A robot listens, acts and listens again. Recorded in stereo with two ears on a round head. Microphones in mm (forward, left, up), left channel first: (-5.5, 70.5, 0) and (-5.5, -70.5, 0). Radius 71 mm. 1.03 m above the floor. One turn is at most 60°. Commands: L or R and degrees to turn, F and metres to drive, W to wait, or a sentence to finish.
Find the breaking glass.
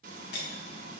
L60
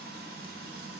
W
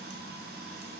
I heard breaking glass, but can't make it out now. It was about 15° left or 45° left.